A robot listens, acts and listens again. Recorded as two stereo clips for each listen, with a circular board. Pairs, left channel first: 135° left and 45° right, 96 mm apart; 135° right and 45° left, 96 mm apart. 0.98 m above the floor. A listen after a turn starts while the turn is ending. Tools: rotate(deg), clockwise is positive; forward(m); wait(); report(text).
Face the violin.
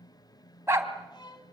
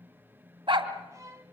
rotate(-100)
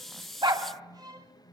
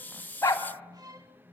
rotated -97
report("Facing the violin, 2 to 4 m away.")